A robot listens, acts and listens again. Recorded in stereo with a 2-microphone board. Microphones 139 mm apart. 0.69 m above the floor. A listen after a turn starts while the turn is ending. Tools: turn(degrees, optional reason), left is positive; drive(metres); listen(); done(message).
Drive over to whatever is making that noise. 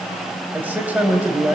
turn(degrees=-30)
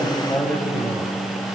turn(degrees=20, reason="So it is at 20° left.")
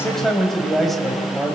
drive(metres=1.0)
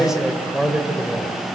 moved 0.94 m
drive(metres=1.0)
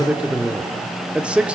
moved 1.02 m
turn(degrees=-10, reason="The man speaking is now 10° right.")
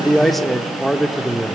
drive(metres=1.0)
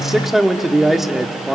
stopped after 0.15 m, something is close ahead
done("I am next to the man speaking.")